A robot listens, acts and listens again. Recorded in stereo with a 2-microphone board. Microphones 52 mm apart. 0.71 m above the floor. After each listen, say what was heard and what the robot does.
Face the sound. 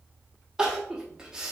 The crying: about 15° right or 165° right. Turn 15° right.
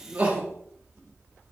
So it is at 150° right. Turn 150° right.
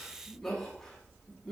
The crying is now 10° left. Turn 10° left.
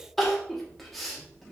Facing the crying, under 1 m away.